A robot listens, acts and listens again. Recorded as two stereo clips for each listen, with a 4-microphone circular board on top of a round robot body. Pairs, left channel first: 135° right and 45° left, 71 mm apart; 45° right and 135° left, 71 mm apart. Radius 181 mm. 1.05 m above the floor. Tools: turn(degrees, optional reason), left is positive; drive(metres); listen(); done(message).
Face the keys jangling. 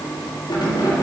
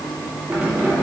turn(degrees=-150, reason="The keys jangling: 150° right.")
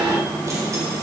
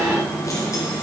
listen()
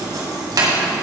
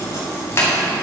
turn(degrees=10, reason="The keys jangling is now 10° left.")
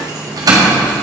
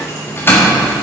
turn(degrees=20, reason="The keys jangling is now 20° left.")
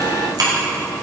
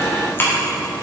turn(degrees=15, reason="The keys jangling is now 15° left.")
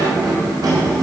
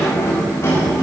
turn(degrees=10, reason="The keys jangling is now 10° left.")
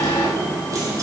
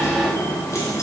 done("Found it: keys jangling, straight ahead, 2 to 4 m away.")